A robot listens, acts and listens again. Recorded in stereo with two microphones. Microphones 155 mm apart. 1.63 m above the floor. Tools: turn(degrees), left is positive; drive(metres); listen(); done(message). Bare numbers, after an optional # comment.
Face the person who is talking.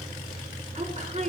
# The woman speaking: about 50° right or 130° right.
turn(-50)
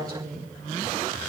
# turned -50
# So it is at 75° right.
turn(-75)
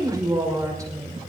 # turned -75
# The woman speaking is now 20° right.
turn(-20)
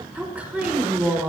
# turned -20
# The woman speaking is now 10° right.
turn(-10)
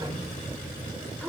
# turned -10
done("Found it: a woman speaking, straight ahead, over 4 m away.")